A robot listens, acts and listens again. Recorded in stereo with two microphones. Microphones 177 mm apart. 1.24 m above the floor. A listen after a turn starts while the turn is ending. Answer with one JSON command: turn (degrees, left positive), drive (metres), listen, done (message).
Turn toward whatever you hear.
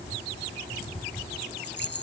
{"turn": 65}
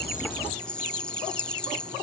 {"done": "Facing the rattle."}